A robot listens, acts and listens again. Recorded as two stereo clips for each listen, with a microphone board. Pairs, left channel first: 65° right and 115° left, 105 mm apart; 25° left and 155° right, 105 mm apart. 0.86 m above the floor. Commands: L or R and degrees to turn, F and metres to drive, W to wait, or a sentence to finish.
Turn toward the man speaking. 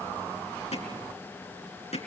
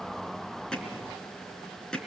W
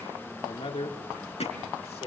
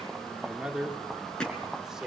R75
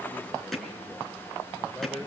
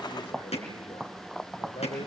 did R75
L15
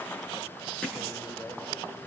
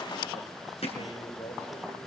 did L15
Facing the man speaking.